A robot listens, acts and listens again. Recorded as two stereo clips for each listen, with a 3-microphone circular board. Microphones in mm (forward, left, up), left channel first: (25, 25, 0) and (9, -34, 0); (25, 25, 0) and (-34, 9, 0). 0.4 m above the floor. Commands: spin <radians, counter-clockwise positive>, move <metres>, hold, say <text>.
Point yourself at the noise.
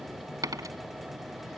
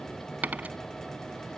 spin -1.83
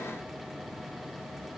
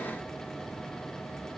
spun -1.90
say I heard a dropped coin from this way, but can't make it out now.